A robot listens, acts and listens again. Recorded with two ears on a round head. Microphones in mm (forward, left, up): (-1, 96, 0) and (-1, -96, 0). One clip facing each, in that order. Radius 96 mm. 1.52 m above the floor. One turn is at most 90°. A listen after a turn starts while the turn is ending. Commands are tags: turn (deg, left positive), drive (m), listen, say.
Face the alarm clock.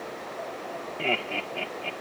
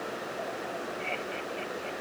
<listen/>
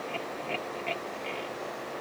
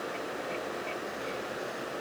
<listen/>
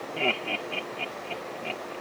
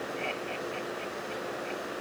<say>I can't make out an alarm clock, only laughter.</say>